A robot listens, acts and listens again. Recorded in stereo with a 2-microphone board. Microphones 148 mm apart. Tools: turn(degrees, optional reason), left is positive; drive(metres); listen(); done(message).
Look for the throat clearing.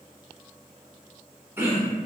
turn(degrees=-15, reason="The throat clearing: about 15° right or 165° right.")
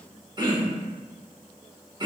turn(degrees=-150, reason="So it is at 150° right.")
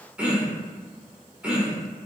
turn(degrees=-10, reason="The throat clearing is now 10° right.")
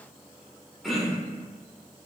done("Facing the throat clearing, under 1 m away.")